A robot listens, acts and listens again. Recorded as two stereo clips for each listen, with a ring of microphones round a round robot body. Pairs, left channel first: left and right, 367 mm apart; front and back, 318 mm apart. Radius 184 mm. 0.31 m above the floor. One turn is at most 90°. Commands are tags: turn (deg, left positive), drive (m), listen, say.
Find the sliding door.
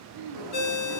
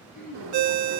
<turn deg="-90"/>
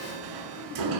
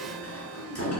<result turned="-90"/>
<turn deg="-55"/>
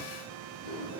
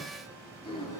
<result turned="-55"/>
<listen/>
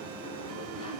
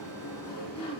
<turn deg="15"/>
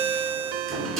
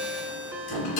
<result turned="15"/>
<say>Facing the sliding door.</say>